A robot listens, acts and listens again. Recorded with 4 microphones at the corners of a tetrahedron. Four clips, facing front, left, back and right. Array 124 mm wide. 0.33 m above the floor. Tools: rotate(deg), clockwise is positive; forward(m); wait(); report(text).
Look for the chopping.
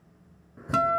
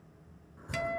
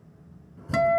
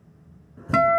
rotate(30)
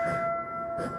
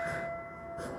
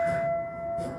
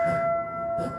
wait()
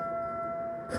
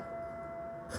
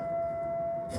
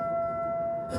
rotate(10)
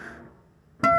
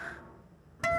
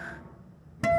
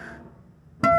report("Found it: chopping, straight ahead.")